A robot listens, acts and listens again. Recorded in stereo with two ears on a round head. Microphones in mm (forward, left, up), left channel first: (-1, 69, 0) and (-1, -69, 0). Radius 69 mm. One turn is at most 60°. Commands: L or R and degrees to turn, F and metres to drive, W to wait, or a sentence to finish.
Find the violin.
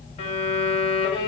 L40
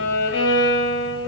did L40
L60
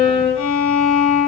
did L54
L40
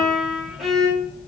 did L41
Found it: a violin, straight ahead.